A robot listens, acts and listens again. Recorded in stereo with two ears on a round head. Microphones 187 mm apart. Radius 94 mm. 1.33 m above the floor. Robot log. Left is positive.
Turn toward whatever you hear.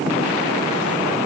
cmd idle
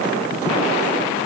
cmd idle
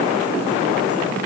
end: I can't make out anything.